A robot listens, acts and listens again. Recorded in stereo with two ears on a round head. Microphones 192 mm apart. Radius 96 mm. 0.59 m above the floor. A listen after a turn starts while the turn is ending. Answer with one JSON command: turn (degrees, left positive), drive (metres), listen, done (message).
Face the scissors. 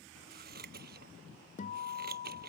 {"turn": -45}
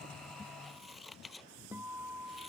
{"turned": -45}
{"done": "Facing the scissors."}